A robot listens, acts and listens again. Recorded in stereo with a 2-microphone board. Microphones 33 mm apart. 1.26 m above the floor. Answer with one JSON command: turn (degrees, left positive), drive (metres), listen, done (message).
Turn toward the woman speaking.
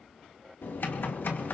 {"listen": true}
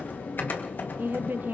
{"turn": -70}
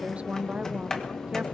{"turn": -40}
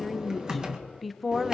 {"done": "Facing the woman speaking."}